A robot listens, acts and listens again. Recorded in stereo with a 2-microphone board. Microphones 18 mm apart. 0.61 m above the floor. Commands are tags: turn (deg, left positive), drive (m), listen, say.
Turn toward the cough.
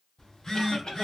<turn deg="55"/>
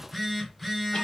<listen/>
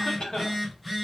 <turn deg="60"/>
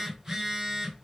<listen/>
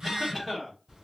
<say>Found it: a cough, straight ahead, 1 to 2 m away.</say>